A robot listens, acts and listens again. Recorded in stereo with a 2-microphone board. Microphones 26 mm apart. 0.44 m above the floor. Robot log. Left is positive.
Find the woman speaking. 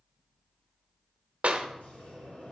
cmd idle
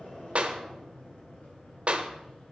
cmd idle
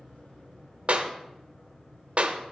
end: I can't make out a woman speaking to turn to.